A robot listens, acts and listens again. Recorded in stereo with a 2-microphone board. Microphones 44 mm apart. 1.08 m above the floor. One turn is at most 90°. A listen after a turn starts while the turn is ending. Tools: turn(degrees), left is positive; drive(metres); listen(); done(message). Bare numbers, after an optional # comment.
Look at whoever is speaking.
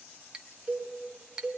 listen()
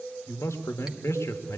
turn(90)
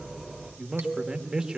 # So it is at 15° right.
turn(-15)
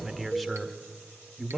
done("Facing the man speaking.")